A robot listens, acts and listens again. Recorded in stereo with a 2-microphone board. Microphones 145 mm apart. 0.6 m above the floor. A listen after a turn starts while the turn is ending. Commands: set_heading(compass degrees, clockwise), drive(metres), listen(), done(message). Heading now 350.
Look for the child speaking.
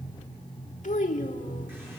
set_heading(285)
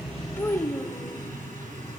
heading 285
set_heading(265)
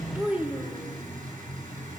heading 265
set_heading(275)
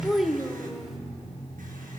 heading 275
done("Found it: a child speaking, straight ahead.")